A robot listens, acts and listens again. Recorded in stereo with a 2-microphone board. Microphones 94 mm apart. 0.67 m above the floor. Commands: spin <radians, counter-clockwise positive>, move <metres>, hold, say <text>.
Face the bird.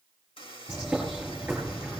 spin -0.52
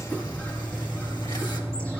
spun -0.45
spin 0.35
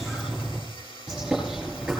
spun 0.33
say Facing the bird.